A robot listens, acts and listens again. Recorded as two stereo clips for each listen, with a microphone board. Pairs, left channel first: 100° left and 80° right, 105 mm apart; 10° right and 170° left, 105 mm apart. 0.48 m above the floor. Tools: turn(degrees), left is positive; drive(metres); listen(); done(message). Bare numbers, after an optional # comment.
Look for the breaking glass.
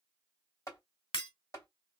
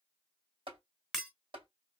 # The breaking glass: 80° left.
turn(80)
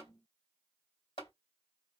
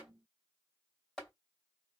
done("I heard breaking glass from this way, but can't make it out now.")